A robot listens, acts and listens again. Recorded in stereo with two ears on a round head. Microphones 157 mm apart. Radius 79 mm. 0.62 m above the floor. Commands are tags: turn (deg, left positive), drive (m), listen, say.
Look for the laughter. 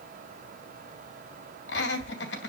<turn deg="65"/>
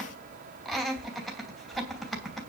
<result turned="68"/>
<say>Found it: laughter, straight ahead, 2 to 4 m away.</say>